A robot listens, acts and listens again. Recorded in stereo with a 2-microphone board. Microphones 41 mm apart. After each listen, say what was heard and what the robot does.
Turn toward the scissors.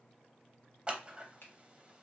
The scissors: about 20° right or 160° right. Turn 20° right.
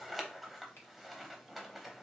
Facing the scissors, under 1 m away.